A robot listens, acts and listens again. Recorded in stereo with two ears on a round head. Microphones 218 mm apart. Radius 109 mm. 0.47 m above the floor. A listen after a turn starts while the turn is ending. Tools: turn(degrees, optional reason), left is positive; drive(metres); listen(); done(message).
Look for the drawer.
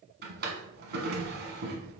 turn(degrees=-45, reason="The drawer: about 45° right or 135° right.")
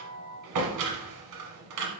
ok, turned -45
turn(degrees=-90, reason="So it is at 90° right.")
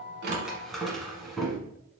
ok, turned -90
done("Facing the drawer, 1 to 2 m away.")